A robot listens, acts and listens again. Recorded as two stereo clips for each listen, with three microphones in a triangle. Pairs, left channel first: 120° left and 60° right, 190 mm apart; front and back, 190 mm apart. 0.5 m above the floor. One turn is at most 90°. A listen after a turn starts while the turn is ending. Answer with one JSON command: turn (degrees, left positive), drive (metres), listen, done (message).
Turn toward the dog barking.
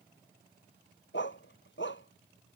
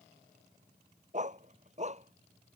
{"turn": 90}
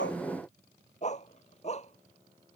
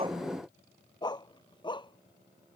{"turn": 65}
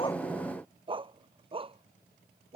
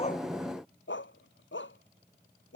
{"done": "Facing the dog barking."}